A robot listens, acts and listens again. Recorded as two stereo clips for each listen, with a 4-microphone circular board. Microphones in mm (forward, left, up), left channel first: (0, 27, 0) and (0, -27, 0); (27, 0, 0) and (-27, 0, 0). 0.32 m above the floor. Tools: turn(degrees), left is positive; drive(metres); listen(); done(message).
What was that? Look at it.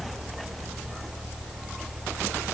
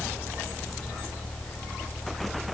listen()
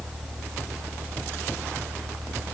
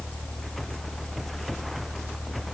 listen()
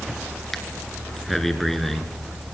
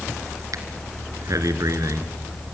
turn(degrees=175)
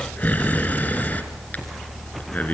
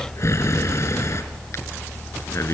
turn(degrees=30)
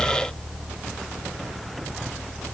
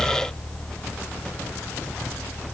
listen()
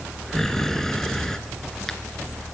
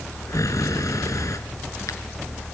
done("Found it: breathing, straight ahead, 2 to 4 m away.")